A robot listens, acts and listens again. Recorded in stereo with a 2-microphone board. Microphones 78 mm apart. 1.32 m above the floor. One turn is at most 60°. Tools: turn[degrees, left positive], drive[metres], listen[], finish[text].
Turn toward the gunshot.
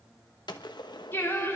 Thought: The gunshot: about 70° left or 110° left.
Action: turn[60]
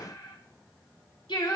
Action: listen[]
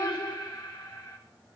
Action: finish[I heard a gunshot, but can't make it out now. It was about 10° left or 50° left.]